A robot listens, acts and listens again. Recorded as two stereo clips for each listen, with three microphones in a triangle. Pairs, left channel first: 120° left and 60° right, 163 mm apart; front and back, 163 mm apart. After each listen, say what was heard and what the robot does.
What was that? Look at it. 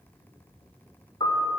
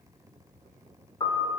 The piano: 60° left. Turn 60° left.
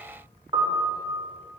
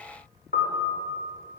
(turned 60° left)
Found it: a piano, straight ahead.